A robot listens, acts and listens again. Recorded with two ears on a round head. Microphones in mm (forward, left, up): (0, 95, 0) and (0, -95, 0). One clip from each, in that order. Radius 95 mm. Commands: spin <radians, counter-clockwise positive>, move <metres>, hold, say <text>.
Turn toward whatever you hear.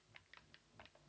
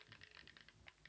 hold
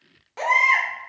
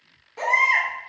spin 0.52
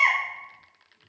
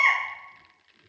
spin 2.09
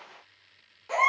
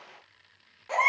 say Facing the baby crying.